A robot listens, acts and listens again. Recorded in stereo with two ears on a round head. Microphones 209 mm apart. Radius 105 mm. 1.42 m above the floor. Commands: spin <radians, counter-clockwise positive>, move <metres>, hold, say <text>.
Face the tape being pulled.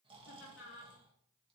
hold
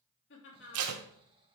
spin -1.22
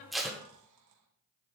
say Found it: tape being pulled, straight ahead.